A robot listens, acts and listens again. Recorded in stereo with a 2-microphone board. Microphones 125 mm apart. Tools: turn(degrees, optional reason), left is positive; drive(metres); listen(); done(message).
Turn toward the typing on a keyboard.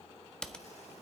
turn(degrees=30)
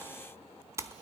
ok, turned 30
turn(degrees=-25, reason="So it is at 25° right.")
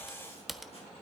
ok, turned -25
done("Found it: typing on a keyboard, straight ahead, 1 to 2 m away.")